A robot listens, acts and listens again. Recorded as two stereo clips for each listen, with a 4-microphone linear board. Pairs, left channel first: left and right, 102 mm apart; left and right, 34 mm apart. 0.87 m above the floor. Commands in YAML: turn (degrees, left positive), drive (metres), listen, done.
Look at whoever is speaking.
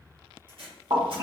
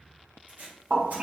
listen: true
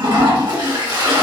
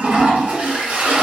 listen: true
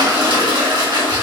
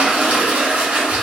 done: "I can't make out anyone speaking to turn to."